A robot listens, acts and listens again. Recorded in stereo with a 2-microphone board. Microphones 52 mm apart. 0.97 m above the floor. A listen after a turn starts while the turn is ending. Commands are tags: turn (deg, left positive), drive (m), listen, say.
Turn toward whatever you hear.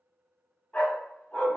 <turn deg="15"/>
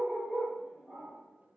<turn deg="-10"/>
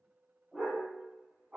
<turn deg="-25"/>
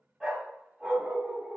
<turn deg="-15"/>
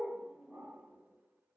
<say>Found it: a dog barking, straight ahead.</say>